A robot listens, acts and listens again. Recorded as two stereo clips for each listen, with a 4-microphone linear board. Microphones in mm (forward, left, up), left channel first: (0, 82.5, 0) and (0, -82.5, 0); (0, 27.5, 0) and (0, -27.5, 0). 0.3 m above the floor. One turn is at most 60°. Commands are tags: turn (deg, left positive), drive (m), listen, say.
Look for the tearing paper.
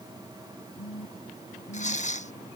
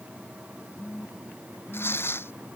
<turn deg="45"/>
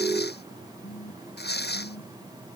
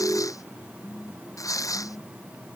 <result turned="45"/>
<turn deg="60"/>
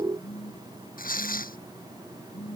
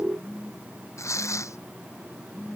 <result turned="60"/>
<turn deg="60"/>
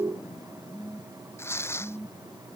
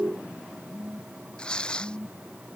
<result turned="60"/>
<turn deg="15"/>
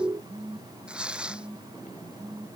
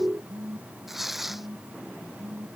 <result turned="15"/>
<say>Facing the tearing paper.</say>